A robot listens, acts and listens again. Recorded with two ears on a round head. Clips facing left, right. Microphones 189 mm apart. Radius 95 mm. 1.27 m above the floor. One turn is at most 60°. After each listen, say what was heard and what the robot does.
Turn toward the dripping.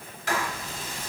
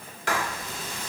Keep listening.
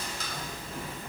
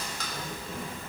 Keep listening.
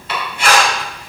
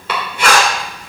I can't make out dripping to turn to.